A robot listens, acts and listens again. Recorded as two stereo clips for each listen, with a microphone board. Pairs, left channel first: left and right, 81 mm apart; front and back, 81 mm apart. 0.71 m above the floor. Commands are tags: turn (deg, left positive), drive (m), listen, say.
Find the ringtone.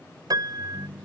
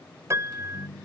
<say>Facing the ringtone.</say>